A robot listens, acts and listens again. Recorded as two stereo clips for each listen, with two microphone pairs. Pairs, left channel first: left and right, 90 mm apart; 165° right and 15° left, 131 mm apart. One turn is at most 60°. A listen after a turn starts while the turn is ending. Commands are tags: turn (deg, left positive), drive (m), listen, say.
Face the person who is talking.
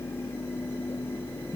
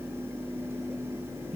<listen/>
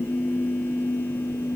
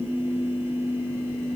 <listen/>
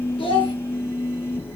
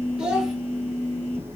<turn deg="60"/>
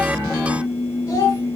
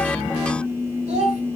<turn deg="40"/>
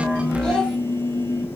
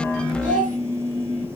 <say>Facing the child speaking.</say>